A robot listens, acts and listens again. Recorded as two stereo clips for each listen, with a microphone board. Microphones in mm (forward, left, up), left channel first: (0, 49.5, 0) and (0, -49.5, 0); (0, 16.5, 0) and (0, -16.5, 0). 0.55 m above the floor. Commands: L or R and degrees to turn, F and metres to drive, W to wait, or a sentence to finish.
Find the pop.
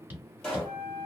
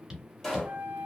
L30
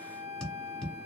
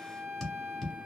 W
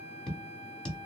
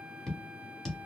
I heard a pop, but can't make it out now. It was about 20° right or 140° left.